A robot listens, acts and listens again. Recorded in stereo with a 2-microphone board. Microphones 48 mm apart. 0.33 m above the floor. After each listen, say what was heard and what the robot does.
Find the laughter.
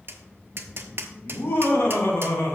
The laughter: about 65° left or 115° left. Turn 65° left.
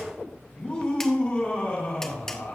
So it is at 40° left. Turn 40° left.
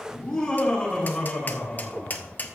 The laughter is now 20° left. Turn 20° left.
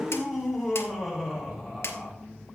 Found it: laughter, straight ahead, over 4 m away.